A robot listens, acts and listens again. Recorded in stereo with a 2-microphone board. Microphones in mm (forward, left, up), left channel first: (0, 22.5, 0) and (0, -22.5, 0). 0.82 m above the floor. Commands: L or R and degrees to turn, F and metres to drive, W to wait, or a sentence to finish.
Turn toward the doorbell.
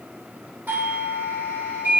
R40
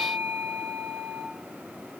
R95
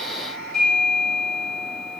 Found it: a doorbell, straight ahead.